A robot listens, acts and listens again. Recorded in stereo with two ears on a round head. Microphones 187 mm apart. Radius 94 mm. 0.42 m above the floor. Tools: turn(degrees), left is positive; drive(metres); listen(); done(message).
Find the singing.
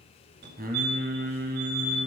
turn(degrees=-45)
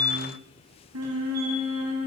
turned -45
turn(degrees=-90)
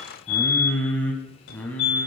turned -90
turn(degrees=10)
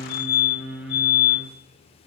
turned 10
done("Found it: singing, straight ahead, 2 to 4 m away.")